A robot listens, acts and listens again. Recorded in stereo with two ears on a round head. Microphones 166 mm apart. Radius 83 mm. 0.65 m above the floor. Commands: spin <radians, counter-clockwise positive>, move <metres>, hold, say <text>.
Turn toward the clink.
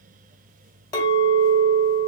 spin 0.35
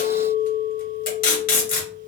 spin 2.44
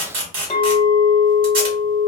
spin 0.35
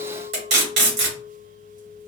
say Found it: a clink, straight ahead, 1 to 2 m away.